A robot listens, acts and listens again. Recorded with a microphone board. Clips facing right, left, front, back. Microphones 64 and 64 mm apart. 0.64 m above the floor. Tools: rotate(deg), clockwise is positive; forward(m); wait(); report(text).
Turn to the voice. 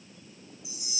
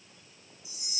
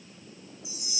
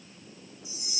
wait()
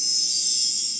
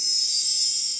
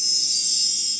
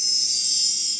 wait()
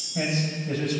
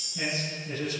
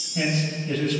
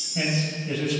rotate(100)
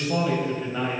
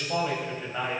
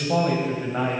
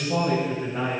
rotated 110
rotate(-10)
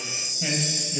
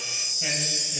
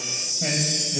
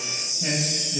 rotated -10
report("Facing the man speaking.")